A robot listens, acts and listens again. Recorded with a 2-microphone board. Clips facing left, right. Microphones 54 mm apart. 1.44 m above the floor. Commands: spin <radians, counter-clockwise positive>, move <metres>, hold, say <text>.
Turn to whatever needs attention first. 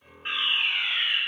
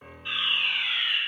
spin 0.70
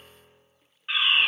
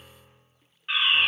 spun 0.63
say Facing the fire alarm, 2 to 4 m away.